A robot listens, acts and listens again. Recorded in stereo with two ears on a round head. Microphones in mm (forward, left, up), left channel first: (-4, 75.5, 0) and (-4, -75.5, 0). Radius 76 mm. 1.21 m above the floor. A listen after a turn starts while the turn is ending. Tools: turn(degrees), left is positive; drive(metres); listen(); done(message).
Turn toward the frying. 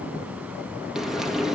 turn(degrees=-30)
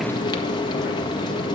turn(degrees=25)
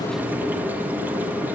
turn(degrees=-10)
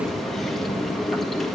done("Facing the frying, 1 to 2 m away.")